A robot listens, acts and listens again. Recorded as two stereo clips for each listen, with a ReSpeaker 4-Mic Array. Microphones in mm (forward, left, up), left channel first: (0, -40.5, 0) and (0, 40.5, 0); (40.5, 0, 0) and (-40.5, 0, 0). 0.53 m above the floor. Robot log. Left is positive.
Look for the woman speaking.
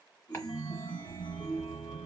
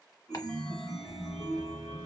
cmd idle
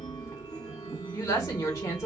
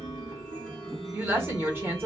note: The woman speaking: 125° right.
cmd yaw -125
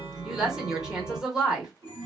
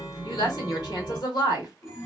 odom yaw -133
note: The woman speaking is now 10° left.
cmd yaw +10
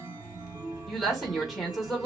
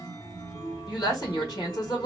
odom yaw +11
end: Found it: a woman speaking, straight ahead.